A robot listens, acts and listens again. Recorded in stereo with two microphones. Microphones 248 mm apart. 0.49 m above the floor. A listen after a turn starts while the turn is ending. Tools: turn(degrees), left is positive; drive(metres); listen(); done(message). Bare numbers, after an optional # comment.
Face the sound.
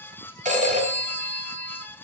# The phone ringing: about 30° right or 150° right.
turn(-30)
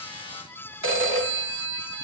# So it is at 120° right.
turn(-120)
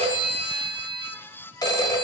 # The phone ringing is now 15° left.
turn(15)
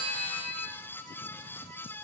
done("Found it: a phone ringing, straight ahead.")